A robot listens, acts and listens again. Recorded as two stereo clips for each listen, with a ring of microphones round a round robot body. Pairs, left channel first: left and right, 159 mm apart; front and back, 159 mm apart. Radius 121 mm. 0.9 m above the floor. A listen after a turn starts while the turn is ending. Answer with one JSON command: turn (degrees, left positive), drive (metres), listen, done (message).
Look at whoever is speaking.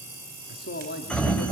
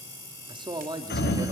{"turn": 115}
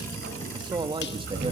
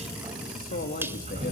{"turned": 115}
{"turn": -35}
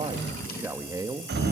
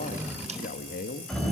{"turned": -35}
{"turn": -25}
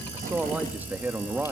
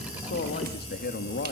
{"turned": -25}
{"turn": -10}
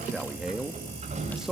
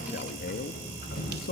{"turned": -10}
{"done": "Found it: a man speaking, straight ahead."}